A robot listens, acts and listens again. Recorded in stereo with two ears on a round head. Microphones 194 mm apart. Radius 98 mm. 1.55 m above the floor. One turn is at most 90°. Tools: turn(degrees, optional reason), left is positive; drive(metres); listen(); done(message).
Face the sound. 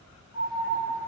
turn(degrees=55, reason="The alarm: about 55° left or 125° left.")
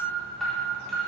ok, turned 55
done("Facing the alarm.")